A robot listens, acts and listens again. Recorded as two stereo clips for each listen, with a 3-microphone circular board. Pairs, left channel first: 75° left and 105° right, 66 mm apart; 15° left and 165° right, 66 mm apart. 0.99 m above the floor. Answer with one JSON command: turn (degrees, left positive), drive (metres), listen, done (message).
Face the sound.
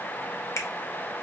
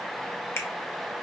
{"turn": 50}
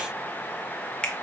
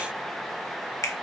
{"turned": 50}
{"done": "Facing the finger snap, under 1 m away."}